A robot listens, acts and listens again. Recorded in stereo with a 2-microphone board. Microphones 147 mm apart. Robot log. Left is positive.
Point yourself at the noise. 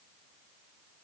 cmd idle
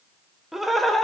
cmd yaw +30
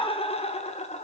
note: So it is at 130° left.
cmd yaw +130
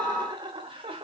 note: The laughter is now 40° right.
cmd yaw -40
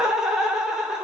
end: Facing the laughter.